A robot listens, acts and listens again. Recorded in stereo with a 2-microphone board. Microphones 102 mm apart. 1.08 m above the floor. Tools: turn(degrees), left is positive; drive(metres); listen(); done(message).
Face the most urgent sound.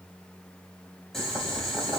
listen()
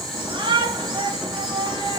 turn(degrees=-50)
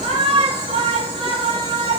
turn(degrees=-80)
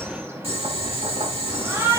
turn(degrees=-25)
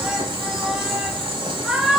turn(degrees=-10)
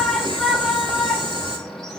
done("Found it: a shout, straight ahead, 2 to 4 m away.")